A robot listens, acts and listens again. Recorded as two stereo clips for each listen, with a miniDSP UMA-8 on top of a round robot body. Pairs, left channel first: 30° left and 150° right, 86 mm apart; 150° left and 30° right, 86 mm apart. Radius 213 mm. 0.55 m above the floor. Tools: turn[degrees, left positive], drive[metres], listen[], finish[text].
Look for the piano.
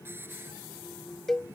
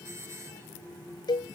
Action: listen[]
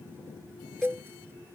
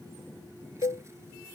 Action: listen[]
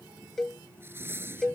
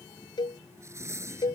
Action: finish[I can't make out a piano, only a hiss and a cowbell.]